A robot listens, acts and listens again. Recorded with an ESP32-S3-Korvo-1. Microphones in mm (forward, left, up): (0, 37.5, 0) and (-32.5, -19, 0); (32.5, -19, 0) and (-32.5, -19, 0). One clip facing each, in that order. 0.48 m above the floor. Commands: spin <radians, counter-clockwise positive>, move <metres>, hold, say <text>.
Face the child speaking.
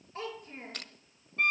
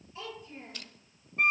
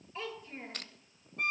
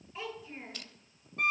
spin 1.66
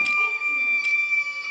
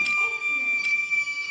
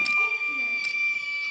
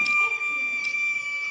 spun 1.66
hold
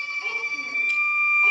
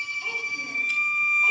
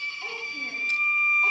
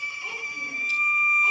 hold
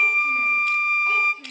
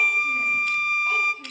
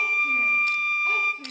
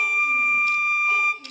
spin 0.26
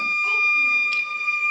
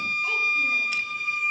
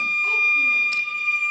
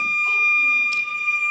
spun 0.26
hold
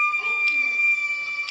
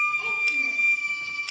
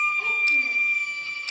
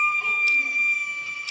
hold
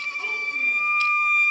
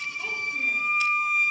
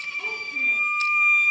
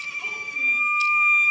say I heard a child speaking from this way, but can't make it out now.